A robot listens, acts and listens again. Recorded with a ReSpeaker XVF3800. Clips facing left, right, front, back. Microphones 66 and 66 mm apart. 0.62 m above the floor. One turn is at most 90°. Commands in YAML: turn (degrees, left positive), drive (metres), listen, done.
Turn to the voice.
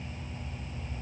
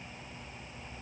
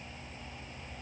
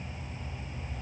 listen: true
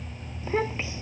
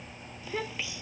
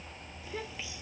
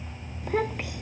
turn: 90
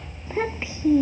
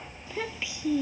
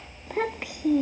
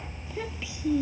turn: 35
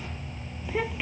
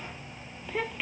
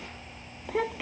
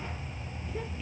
done: "Found it: a child speaking, straight ahead."